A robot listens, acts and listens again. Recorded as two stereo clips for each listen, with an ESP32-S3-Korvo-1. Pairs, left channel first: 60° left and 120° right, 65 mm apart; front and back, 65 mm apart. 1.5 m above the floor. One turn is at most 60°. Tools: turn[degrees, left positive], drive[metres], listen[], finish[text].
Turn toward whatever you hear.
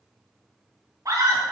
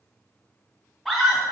Thought: The scream: 85° right.
Action: turn[-60]
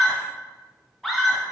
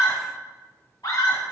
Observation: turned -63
Thought: The scream is now 25° right.
Action: turn[-25]
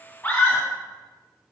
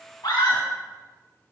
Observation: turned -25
Action: finish[Facing the scream.]